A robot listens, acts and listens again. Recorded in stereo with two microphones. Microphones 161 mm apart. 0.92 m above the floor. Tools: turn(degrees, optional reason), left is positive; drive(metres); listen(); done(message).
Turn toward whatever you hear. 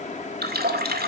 turn(degrees=-90)
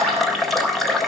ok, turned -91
done("Facing the running tap, 1 to 2 m away.")